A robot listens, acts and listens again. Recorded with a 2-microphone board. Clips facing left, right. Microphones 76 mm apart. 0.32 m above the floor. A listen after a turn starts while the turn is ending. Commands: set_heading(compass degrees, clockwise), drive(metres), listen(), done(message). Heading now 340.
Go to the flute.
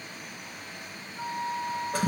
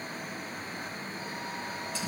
set_heading(295)
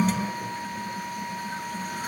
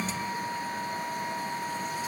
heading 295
drive(1.0)
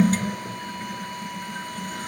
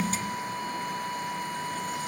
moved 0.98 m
set_heading(305)
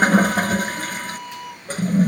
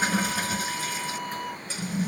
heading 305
drive(1.0)
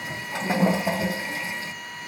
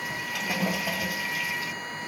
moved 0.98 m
listen()
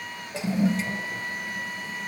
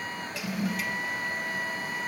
listen()
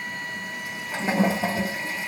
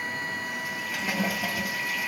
done("Facing where the flute came from. I can't hear it now. I did not reach it.")